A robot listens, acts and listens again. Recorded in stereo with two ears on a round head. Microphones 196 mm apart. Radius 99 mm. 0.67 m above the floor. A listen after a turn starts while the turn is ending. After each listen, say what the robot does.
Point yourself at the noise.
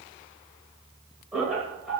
Turn 30° left.
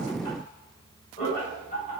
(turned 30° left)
Turn 140° left.
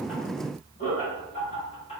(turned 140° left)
Turn 30° left.
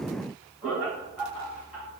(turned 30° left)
Facing the laughter.